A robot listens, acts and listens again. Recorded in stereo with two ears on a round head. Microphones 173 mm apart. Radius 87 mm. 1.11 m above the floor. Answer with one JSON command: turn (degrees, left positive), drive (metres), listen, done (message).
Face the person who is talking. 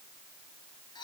{"listen": true}
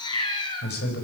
{"turn": 65}
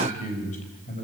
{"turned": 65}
{"turn": 40}
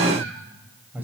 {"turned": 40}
{"turn": -10}
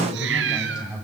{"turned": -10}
{"done": "Facing the man speaking."}